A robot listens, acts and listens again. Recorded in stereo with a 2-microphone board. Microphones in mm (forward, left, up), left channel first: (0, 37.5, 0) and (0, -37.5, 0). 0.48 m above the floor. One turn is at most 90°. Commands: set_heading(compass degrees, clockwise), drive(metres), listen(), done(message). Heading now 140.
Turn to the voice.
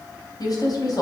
set_heading(80)
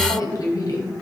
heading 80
set_heading(25)
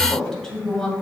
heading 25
set_heading(15)
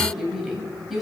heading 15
done("Found it: a woman speaking, straight ahead, 2 to 4 m away.")